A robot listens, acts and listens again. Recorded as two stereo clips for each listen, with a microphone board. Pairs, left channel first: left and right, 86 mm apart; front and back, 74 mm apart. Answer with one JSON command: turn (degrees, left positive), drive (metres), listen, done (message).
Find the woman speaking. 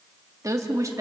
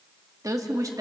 {"turn": -145}
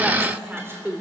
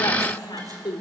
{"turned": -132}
{"turn": -20}
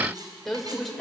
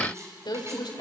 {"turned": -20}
{"done": "Facing the woman speaking."}